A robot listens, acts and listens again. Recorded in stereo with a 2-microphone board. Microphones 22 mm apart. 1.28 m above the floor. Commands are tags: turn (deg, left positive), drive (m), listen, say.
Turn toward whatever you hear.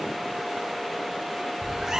<turn deg="-35"/>
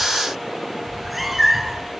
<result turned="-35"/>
<say>Found it: a cat meowing, straight ahead, 2 to 4 m away.</say>